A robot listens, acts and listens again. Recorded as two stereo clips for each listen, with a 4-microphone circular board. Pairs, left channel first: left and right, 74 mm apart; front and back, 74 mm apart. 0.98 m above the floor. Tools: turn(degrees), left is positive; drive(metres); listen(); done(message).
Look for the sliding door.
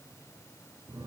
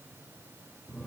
listen()
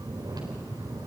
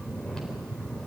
listen()
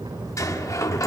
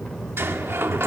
turn(degrees=125)
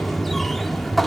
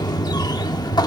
done("Facing the sliding door.")